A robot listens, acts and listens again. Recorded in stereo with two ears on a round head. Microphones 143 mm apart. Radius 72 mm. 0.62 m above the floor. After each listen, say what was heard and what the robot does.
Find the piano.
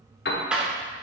The piano: about 65° left or 115° left. Turn 65° left.
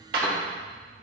Keep listening.
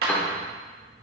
So it is at 10° left. Turn 10° left.
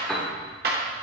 Found it: a piano, straight ahead, 1 to 2 m away.